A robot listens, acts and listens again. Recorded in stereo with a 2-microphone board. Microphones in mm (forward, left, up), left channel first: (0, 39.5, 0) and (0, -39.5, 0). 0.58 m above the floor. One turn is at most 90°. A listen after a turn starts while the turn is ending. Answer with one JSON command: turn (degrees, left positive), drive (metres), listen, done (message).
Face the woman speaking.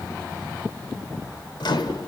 {"listen": true}
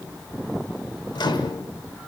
{"listen": true}
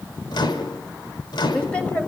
{"turn": 30}
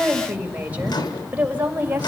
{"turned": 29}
{"turn": -20}
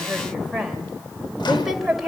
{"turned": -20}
{"done": "Facing the woman speaking."}